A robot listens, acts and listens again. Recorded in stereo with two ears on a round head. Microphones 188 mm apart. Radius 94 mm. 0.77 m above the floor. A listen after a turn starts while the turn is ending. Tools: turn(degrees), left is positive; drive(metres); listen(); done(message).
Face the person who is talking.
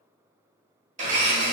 listen()
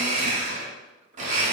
listen()
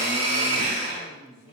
turn(degrees=30)
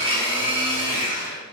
listen()
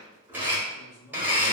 turn(degrees=115)
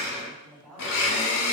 turn(degrees=10)
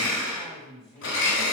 done("Facing the man speaking.")